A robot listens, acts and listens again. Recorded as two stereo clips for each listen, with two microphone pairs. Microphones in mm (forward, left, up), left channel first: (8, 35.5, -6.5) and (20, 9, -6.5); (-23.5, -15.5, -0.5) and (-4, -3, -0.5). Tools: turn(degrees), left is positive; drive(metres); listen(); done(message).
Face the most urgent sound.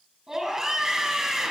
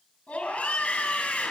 turn(degrees=-140)
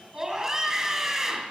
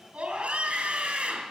turn(degrees=10)
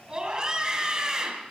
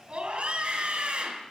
done("Facing the scream.")